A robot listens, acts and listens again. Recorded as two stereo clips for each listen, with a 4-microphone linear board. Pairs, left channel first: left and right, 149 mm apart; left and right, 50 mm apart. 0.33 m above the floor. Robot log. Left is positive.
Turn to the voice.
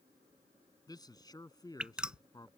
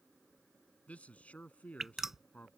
note: The man speaking: about 25° left or 155° left.
cmd yaw +25
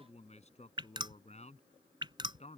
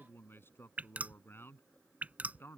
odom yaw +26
note: So it is at 125° left.
cmd yaw +125
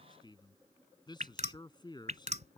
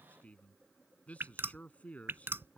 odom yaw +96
note: The man speaking is now 30° left.
cmd yaw +30
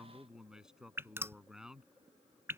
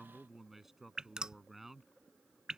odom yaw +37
end: Facing the man speaking.